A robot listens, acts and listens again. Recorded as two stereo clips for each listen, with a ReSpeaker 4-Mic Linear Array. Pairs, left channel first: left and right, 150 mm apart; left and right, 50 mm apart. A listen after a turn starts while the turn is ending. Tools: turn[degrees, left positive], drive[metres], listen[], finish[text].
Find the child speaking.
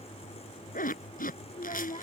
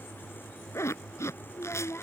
Thought: The child speaking: about 55° left or 125° left.
Action: turn[55]
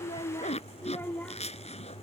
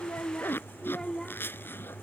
Thought: So it is at 10° left.
Action: turn[10]
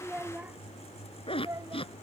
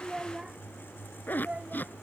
Thought: The child speaking is now 25° right.
Action: turn[-25]
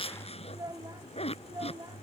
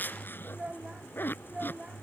Thought: The child speaking is now 30° right.
Action: turn[-30]
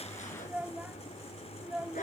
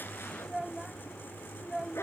Thought: The child speaking is now 10° right.
Action: turn[-10]
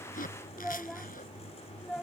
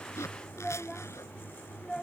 Action: finish[Facing the child speaking.]